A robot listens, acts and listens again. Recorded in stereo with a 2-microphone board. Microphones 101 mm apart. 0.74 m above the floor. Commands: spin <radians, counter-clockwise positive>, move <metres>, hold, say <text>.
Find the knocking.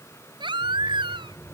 spin 0.52
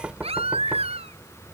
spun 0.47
spin -0.26
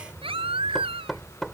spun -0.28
say Facing the knocking.